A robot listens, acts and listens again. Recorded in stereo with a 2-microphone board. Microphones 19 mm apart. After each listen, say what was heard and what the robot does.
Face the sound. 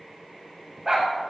The dog barking: about 45° right or 135° right. Turn 45° right.
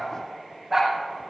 Facing the dog barking.